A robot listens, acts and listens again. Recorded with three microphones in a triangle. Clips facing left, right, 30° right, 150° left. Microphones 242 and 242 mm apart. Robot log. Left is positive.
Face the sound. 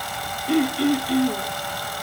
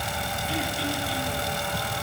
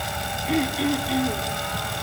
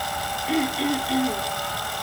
note: The throat clearing: 60° left.
cmd yaw +60
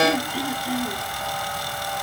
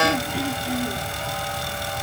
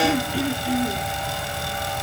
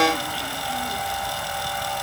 cmd idle
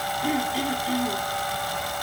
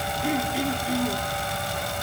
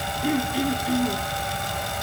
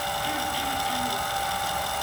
end: Found it: throat clearing, straight ahead, 2 to 4 m away.